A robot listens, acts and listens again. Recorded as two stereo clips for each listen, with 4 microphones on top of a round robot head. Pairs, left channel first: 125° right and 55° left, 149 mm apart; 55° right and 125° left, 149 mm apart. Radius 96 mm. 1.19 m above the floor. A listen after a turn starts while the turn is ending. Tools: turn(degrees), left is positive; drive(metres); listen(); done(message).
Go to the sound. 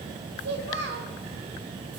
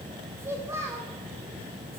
turn(degrees=50)
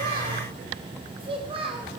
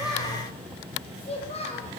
drive(metres=1.0)
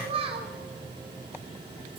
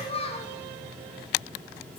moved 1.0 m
drive(metres=1.0)
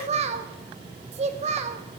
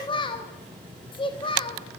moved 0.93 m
drive(metres=1.0)
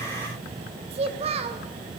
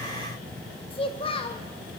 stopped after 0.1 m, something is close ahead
done("I am next to the child speaking.")